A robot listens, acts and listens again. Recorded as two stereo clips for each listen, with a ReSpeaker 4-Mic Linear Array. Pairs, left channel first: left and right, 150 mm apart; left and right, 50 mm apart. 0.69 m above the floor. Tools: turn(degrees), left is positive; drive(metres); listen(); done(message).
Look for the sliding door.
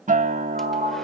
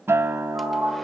turn(degrees=-75)
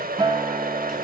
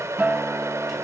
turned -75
listen()
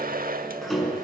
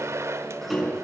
done("Found it: a sliding door, straight ahead, over 4 m away.")